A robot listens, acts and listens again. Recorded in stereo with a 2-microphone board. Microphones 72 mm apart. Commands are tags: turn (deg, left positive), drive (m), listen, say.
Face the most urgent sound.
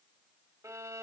<listen/>
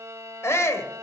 <turn deg="40"/>
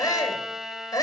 <turn deg="100"/>
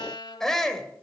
<turn deg="10"/>
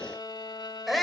<say>Found it: a shout, straight ahead.</say>